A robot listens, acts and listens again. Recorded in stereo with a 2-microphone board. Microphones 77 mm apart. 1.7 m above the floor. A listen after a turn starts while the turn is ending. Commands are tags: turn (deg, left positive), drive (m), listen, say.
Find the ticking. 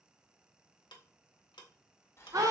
<turn deg="90"/>
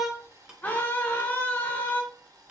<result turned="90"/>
<listen/>
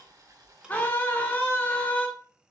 <listen/>
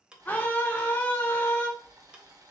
<turn deg="-15"/>
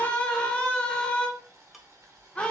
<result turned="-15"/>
<listen/>
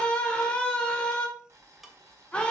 <listen/>
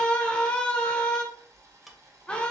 <say>I heard ticking from this way, but can't make it out now.</say>